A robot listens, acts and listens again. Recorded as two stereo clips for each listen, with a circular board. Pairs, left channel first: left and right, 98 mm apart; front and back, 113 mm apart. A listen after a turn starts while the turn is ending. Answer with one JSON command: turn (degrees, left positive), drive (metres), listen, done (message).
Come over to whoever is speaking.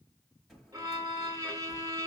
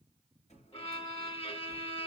{"listen": true}
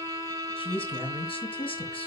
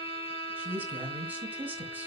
{"turn": 105}
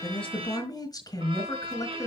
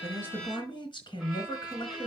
{"turn": 45}
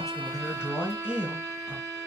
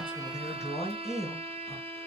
{"drive": 1.0}
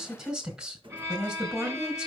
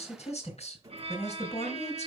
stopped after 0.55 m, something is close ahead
{"done": "Blocked. The man speaking is further on, straight ahead."}